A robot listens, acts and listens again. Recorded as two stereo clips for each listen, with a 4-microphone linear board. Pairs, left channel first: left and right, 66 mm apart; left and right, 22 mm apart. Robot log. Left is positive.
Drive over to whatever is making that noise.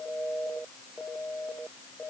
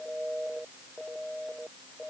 cmd idle
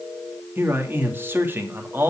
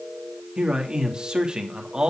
note: The man speaking: about 35° right or 145° right.
cmd yaw -35
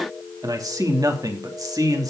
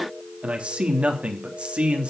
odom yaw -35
note: So it is at 110° right.
cmd yaw -110
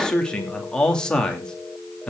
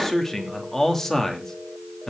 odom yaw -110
note: The man speaking is now 15° left.
cmd yaw +15
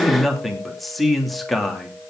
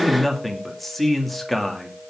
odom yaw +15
cmd fwd 1.0
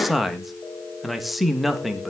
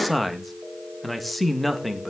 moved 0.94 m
cmd fwd 1.0
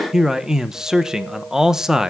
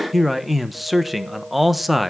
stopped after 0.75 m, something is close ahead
note: The man speaking is now 10° right.
cmd yaw -10
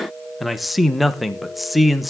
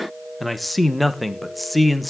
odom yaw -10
end: I am next to the man speaking.